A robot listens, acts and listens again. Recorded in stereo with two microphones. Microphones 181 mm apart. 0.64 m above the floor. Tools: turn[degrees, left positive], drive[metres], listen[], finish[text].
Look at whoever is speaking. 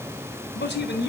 Action: turn[90]
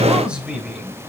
Action: finish[Found it: a man speaking, straight ahead.]